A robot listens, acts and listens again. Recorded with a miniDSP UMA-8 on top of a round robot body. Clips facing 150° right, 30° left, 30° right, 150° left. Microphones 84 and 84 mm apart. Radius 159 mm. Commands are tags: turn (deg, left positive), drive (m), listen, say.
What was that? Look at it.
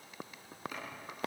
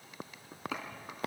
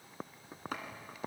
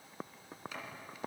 <turn deg="20"/>
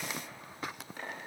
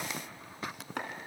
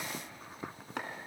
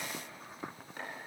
<say>Facing the chopping, 2 to 4 m away.</say>